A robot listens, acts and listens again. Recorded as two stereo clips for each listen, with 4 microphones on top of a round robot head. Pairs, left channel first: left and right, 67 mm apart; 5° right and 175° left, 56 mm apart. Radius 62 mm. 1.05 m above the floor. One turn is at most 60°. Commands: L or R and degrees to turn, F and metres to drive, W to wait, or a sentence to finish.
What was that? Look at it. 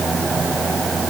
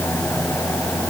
W
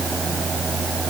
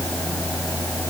W
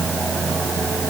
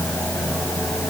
I can't make out anything.